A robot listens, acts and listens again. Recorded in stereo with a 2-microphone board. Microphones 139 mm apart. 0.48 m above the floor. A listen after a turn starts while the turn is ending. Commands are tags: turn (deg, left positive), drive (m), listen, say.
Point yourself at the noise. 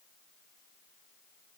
<listen/>
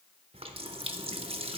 <turn deg="-45"/>
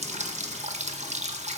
<turn deg="-80"/>
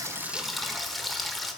<say>Facing the running tap.</say>